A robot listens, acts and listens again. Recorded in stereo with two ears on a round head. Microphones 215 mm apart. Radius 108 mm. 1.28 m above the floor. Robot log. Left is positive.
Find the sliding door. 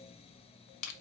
cmd idle
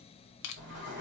note: The sliding door: about 50° right or 130° right.
cmd yaw -50
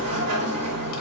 note: So it is at 75° right.
cmd yaw -75
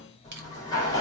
note: The sliding door is now 15° left.
cmd yaw +15
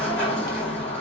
end: Found it: a sliding door, straight ahead, 2 to 4 m away.